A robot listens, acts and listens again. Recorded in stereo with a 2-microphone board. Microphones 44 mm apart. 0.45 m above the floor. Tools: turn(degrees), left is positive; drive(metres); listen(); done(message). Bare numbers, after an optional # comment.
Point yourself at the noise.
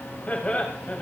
# The laughter: about 35° left or 145° left.
turn(35)
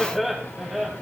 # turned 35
# So it is at 10° right.
turn(-10)
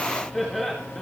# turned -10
done("Found it: laughter, straight ahead, 2 to 4 m away.")